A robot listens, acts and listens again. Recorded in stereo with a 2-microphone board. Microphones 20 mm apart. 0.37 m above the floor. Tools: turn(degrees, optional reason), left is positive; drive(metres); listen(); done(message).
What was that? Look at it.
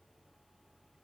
listen()
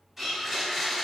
turn(degrees=-30)
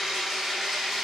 turn(degrees=-145, reason="So it is at 145° right.")
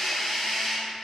done("Facing the blender.")